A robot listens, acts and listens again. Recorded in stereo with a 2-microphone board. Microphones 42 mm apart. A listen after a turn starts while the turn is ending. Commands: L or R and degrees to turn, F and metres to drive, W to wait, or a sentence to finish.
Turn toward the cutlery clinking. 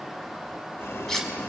L30
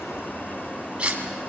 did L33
R25
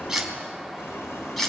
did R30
Found it: cutlery clinking, straight ahead.